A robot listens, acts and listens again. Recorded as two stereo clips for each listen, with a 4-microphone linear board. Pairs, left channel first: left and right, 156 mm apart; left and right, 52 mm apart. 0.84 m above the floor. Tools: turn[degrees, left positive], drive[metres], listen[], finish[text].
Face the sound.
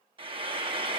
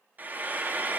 Thought: The frying: about 35° right or 145° right.
Action: turn[-35]
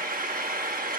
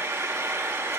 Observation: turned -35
Thought: So it is at 110° right.
Action: turn[-110]
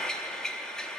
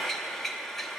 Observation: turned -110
Action: finish[Found it: frying, straight ahead, under 1 m away.]